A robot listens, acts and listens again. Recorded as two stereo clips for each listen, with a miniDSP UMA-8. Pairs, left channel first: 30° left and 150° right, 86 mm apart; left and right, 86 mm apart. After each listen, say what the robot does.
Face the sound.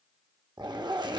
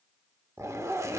Turn 140° right.
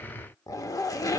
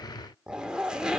Turn 10° right.
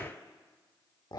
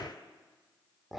Found it: a zipper, straight ahead.